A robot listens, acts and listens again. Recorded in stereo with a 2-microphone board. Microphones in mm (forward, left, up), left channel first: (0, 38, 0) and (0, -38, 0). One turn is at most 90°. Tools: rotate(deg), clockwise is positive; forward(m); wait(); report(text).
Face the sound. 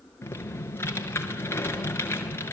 rotate(-30)
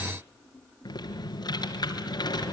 rotate(-90)
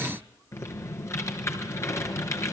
rotate(-40)
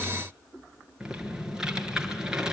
rotate(10)
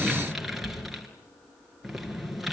report("Facing the typing on a keyboard.")